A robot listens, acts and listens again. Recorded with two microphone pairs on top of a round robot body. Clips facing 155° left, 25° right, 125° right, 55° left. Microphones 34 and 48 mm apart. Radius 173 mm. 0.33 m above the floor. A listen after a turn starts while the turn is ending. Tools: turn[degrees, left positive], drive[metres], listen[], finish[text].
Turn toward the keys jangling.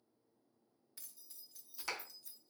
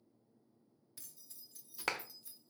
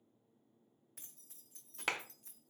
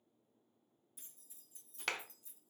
Thought: The keys jangling: 100° right.
Action: turn[-100]
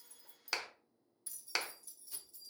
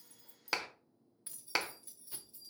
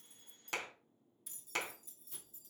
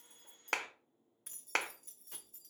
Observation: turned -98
Thought: The keys jangling is now 50° left.
Action: turn[50]
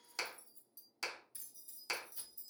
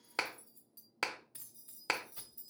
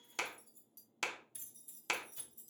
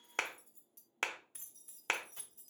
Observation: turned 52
Thought: The keys jangling is now 25° left.
Action: turn[25]
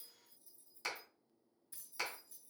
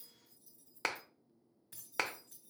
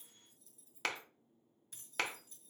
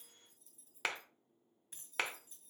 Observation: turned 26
Action: finish[Facing the keys jangling.]